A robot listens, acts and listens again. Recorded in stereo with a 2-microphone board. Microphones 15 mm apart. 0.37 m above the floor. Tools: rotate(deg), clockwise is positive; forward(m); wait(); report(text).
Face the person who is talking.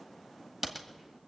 wait()
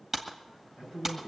rotate(70)
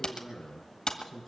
report("Facing the man speaking.")